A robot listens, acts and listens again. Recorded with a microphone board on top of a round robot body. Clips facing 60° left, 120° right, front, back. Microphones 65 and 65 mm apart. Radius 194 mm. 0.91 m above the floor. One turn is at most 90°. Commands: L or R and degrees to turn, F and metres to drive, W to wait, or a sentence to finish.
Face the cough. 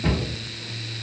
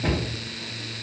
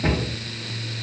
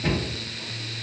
W
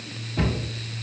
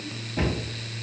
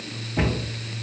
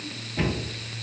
W
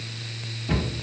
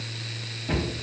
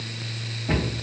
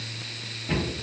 I can't make out a cough to turn to.